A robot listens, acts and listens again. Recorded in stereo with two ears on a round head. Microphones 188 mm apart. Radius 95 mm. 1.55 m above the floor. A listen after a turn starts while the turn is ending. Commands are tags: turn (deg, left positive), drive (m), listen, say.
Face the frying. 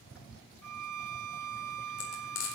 <turn deg="55"/>
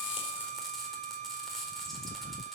<say>Found it: frying, straight ahead.</say>